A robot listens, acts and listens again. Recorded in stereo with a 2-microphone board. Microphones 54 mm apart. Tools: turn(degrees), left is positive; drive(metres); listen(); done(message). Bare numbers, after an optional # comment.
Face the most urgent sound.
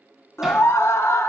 # The scream: about 60° left or 120° left.
turn(60)
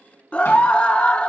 # So it is at 30° left.
turn(30)
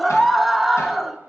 done("Facing the scream, 1 to 2 m away.")